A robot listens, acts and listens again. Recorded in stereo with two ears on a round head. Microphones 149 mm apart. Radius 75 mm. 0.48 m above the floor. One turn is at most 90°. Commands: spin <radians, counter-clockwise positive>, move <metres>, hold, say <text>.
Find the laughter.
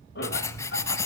spin 1.22
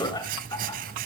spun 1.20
spin 0.35
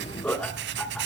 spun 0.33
say Found it: laughter, straight ahead.